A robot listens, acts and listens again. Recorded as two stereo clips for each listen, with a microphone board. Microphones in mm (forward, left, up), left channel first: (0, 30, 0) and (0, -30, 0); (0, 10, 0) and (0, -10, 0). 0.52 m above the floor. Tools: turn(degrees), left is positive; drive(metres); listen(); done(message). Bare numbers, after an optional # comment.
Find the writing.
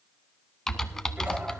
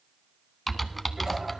listen()
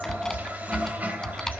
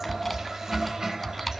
listen()
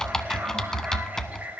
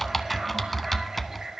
done("I can't make out writing to turn to.")